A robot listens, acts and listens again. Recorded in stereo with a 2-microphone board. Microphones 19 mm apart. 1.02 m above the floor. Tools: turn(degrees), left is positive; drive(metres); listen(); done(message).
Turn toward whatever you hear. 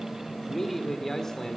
turn(degrees=20)
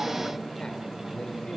listen()
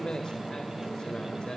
turn(degrees=135)
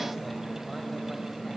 listen()
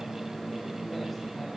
listen()
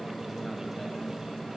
done("Facing where the man speaking came from. I can't hear it now.")